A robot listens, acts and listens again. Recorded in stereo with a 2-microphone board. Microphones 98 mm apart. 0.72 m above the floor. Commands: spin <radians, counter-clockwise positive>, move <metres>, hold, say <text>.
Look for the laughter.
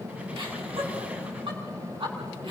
spin -1.13
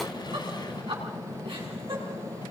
spin -1.05
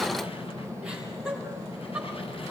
spin -0.17
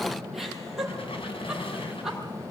say Facing the laughter.